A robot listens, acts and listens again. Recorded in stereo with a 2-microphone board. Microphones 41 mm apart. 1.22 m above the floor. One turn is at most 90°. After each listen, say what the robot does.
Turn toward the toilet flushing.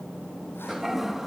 Turn 30° right.
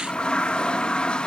Turn 25° left.
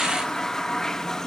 Turn 15° left.
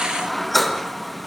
Facing the toilet flushing, 1 to 2 m away.